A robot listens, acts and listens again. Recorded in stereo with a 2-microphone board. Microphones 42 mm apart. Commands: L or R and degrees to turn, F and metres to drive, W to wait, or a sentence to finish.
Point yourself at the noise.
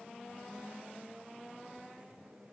W
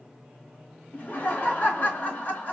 L40
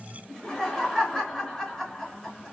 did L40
Found it: laughter, straight ahead, 2 to 4 m away.